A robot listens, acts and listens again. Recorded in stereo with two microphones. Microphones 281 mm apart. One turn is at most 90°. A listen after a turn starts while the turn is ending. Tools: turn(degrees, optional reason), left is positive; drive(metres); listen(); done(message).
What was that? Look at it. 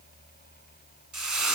turn(degrees=-90)
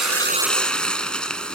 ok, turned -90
done("Facing the frying, 1 to 2 m away.")